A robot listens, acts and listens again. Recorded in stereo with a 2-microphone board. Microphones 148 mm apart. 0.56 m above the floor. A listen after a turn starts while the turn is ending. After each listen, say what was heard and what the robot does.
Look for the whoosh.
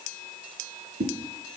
Turn 90° right.
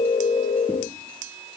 Keep listening.
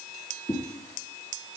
The whoosh is now 15° left. Turn 15° left.
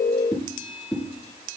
Found it: a whoosh, straight ahead.